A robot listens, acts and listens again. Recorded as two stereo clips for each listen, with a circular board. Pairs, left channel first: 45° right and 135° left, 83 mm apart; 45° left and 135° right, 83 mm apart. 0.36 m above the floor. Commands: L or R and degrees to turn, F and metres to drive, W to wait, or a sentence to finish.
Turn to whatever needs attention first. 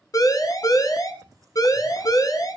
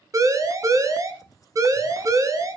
R85
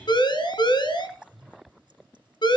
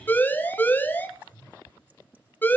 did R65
R20
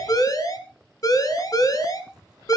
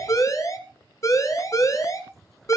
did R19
Facing the siren.